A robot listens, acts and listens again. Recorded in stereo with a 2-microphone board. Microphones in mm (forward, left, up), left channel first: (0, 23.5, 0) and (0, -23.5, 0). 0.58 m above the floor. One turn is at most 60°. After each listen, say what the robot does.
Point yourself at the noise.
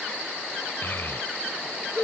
Turn 60° left.
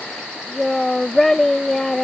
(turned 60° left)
Turn 10° left.
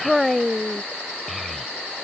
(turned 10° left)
Found it: a child speaking, straight ahead.